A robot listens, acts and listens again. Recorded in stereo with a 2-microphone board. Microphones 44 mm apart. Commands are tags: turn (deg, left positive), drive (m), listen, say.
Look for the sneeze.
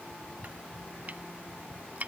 <listen/>
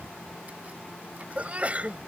<turn deg="-35"/>
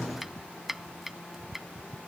<listen/>
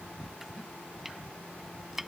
<say>I heard a sneeze, but can't make it out now. It was about straight ahead or 110° right.</say>